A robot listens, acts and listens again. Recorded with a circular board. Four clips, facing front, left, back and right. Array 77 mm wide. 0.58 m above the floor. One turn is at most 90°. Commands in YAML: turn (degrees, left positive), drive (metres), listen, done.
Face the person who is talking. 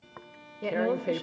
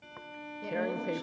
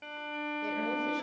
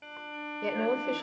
turn: -50
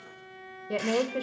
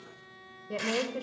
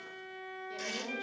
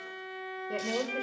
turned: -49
done: "Facing the woman speaking, 1 to 2 m away."